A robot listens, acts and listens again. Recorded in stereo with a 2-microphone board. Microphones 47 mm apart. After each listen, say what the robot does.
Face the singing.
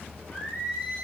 Turn 20° left.
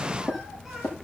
Keep listening.
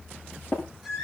Turn 30° left.
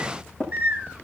Turn 25° right.
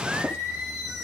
Found it: singing, straight ahead, 2 to 4 m away.